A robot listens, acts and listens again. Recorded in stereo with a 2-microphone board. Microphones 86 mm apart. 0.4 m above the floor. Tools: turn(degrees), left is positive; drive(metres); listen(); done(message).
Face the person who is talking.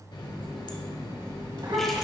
turn(degrees=-65)
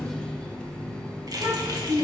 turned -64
turn(degrees=-45)
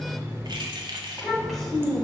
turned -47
done("Facing the child speaking, 2 to 4 m away.")